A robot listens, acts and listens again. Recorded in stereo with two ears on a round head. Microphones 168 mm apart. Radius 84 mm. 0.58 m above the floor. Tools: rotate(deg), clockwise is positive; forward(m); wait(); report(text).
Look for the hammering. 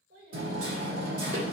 rotate(50)
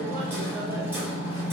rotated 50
rotate(15)
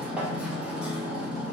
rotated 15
report("Facing the hammering.")